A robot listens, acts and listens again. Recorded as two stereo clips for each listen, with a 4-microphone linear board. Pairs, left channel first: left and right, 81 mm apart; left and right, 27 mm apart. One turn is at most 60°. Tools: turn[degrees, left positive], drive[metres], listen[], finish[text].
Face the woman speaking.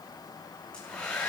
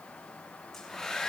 Action: listen[]
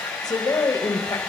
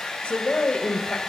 Thought: The woman speaking: about 50° left or 130° left.
Action: turn[50]
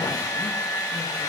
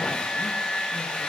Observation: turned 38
Action: listen[]
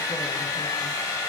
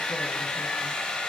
Action: listen[]
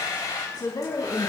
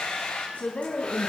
Thought: The woman speaking: about 55° left or 125° left.
Action: turn[55]
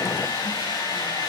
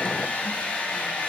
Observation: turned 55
Action: listen[]
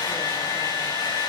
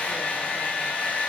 Action: listen[]
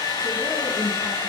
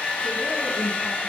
Action: finish[I heard a woman speaking, but can't make it out now. It was about straight ahead or 70° left.]